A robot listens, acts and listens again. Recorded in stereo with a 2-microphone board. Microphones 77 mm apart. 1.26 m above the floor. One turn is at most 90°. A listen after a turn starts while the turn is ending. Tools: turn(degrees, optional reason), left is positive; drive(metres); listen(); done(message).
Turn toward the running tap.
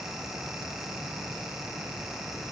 listen()
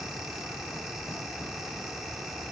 listen()
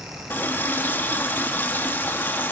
turn(degrees=25, reason="The running tap: about 25° left or 155° left.")
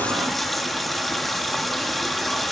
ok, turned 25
done("Found it: a running tap, straight ahead.")